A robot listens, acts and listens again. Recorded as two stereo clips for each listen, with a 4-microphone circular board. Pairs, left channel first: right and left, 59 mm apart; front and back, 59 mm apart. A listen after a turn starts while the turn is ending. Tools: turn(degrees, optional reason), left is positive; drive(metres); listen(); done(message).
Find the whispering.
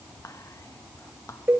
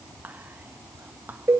turn(degrees=-120, reason="The whispering: 120° right.")
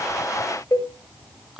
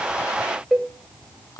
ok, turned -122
done("Facing the whispering, 1 to 2 m away.")